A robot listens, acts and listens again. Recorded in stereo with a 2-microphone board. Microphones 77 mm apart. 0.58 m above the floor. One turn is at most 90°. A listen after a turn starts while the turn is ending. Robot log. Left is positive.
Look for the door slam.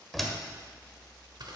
cmd yaw +30
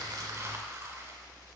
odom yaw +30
cmd idle
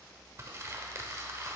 end: I heard a door slam, but can't make it out now. It was about 30° right or 150° left.